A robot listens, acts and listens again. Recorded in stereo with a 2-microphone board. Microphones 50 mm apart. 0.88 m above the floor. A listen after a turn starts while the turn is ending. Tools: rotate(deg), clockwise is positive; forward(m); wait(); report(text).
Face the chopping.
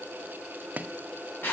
rotate(35)
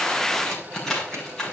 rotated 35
wait()
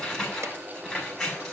wait()
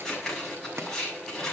report("I heard chopping, but can't make it out now. It was about straight ahead or 110° right.")